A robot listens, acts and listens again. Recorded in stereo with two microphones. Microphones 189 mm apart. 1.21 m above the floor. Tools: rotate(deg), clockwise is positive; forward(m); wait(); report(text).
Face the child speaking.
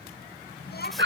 rotate(-65)
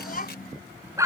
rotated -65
rotate(-50)
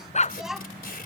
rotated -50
report("Facing the child speaking.")